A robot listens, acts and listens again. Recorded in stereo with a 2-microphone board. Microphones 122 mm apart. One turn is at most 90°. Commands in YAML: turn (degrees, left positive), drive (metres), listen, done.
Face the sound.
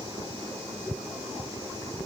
listen: true
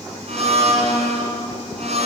turn: -60
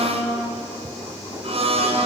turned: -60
turn: -55
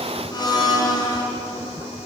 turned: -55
turn: 35
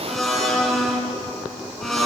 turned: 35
done: "Facing the blender."